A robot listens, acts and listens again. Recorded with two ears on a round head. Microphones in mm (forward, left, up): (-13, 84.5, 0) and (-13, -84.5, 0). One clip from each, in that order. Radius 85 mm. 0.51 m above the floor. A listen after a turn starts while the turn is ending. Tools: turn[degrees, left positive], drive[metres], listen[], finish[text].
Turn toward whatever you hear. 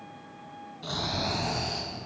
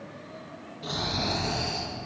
Action: turn[30]
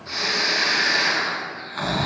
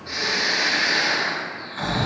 Thought: So it is at 140° left.
Action: turn[140]
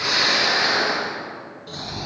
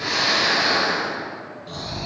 Thought: The snoring is now 10° left.
Action: turn[10]
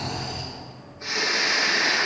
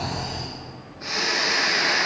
Action: finish[Found it: snoring, straight ahead.]